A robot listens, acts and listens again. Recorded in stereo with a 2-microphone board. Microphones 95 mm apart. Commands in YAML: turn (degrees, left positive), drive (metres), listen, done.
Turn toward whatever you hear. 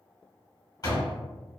turn: 45
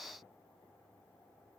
listen: true
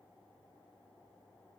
done: "I heard a door slam, but can't make it out now. It was about straight ahead or 90° left."